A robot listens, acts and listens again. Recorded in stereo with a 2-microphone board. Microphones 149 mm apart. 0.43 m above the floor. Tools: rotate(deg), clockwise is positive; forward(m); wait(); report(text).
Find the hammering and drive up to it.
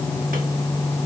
wait()
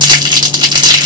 wait()
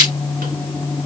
report("I can't make out hammering to turn to.")